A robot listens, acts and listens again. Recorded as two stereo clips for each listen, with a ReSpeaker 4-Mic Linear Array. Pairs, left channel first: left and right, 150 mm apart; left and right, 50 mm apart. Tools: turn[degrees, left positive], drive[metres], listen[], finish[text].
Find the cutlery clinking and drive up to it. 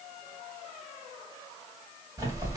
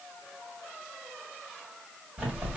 Action: listen[]
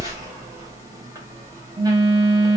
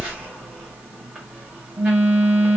Action: listen[]
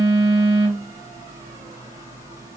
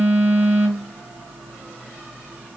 Action: finish[I can't make out cutlery clinking, only a phone buzzing.]